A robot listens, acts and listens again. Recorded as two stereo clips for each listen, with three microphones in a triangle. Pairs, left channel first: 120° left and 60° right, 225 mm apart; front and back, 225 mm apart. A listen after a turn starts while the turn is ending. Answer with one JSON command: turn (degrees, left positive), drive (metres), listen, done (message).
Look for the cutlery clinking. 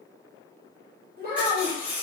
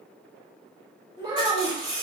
{"turn": -145}
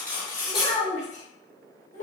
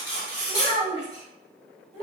{"turn": 30}
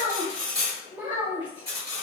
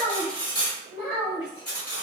{"turn": -15}
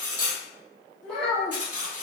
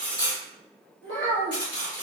{"done": "Facing the cutlery clinking."}